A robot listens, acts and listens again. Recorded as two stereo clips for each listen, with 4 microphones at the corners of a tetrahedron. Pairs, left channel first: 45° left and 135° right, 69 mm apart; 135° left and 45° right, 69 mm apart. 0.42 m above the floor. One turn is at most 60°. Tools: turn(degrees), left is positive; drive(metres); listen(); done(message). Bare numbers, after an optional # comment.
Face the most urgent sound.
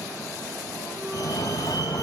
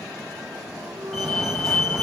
# The fire alarm: 50° left.
turn(50)
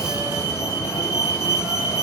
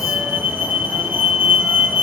# The fire alarm is now 15° left.
turn(15)
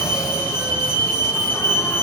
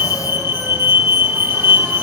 done("Facing the fire alarm.")